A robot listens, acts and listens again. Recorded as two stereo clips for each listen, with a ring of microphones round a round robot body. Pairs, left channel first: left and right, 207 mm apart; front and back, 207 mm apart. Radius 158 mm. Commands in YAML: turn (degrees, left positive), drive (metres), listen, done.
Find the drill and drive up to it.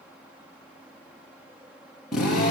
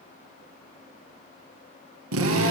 turn: 180
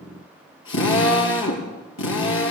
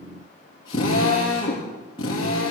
turn: 75
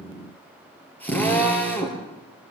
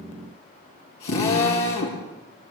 turn: 10
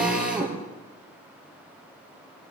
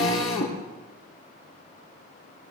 drive: 1.0
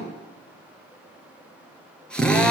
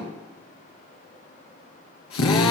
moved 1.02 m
drive: 1.0
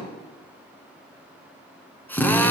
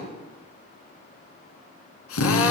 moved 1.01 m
turn: 10
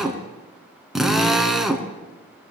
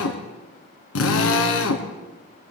drive: 1.0
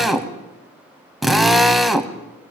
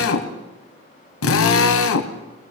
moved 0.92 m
drive: 1.0
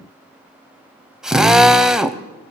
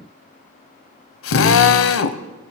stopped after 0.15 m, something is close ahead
done: "Arrived at the drill, straight ahead."